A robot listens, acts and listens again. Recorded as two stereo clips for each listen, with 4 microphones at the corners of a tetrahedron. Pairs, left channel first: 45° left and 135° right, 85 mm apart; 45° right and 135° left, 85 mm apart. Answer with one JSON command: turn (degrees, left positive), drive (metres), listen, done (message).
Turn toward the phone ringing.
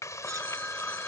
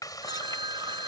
{"turn": 120}
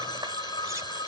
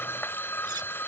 {"turn": 15}
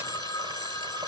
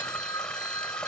{"done": "Facing the phone ringing."}